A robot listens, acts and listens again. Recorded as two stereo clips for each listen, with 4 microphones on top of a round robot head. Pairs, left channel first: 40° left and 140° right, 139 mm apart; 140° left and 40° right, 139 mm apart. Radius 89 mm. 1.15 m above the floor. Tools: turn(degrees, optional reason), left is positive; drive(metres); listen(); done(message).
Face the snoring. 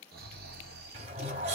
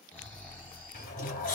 turn(degrees=-140, reason="The snoring: 140° right.")
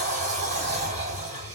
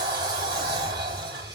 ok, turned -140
listen()
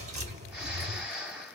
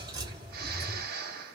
turn(degrees=-55, reason="The snoring is now 55° right.")
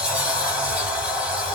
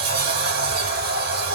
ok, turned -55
listen()
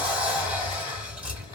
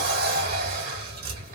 listen()
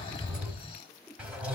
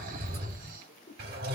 turn(degrees=-15, reason="The snoring is now 15° right.")
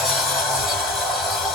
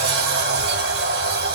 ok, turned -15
listen()
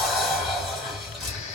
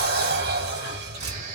listen()
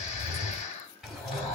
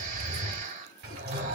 done("Facing the snoring.")